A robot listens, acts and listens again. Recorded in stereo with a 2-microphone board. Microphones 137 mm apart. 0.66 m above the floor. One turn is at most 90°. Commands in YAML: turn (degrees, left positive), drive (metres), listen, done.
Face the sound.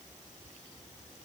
listen: true
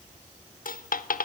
turn: 90
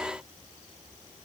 done: "Facing where the dropped coin came from. I can't hear it now."